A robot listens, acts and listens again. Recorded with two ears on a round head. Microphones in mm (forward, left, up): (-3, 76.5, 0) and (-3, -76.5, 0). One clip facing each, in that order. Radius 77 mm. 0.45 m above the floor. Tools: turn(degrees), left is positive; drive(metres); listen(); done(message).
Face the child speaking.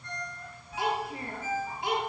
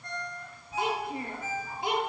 turn(degrees=-75)
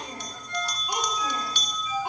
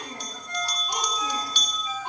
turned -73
turn(degrees=10)
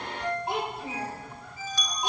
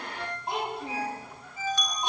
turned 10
done("Facing the child speaking, over 4 m away.")